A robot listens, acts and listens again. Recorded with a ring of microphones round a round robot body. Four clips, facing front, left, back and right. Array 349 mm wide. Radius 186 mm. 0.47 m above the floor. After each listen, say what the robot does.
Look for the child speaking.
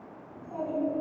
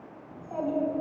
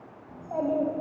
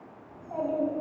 Turn 165° left.
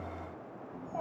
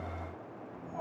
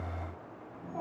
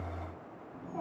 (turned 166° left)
Found it: a child speaking, straight ahead, 2 to 4 m away.